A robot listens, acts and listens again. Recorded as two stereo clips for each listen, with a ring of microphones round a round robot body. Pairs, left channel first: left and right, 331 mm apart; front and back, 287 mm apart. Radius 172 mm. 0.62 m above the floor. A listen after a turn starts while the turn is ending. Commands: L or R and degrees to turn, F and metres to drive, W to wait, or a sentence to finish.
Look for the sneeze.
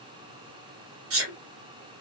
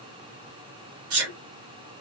R140
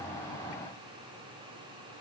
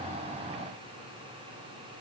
Facing where the sneeze came from. I can't hear it now.